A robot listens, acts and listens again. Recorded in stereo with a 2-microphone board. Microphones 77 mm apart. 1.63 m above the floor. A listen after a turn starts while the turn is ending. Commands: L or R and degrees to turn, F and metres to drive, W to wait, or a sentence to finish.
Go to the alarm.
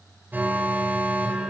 R25
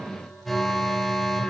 F1.0
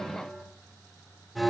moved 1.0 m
F1.0
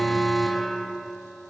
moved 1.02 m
F1.0
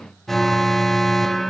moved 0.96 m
F1.0
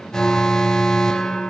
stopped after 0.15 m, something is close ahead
L10
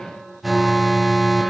Arrived at the alarm, straight ahead.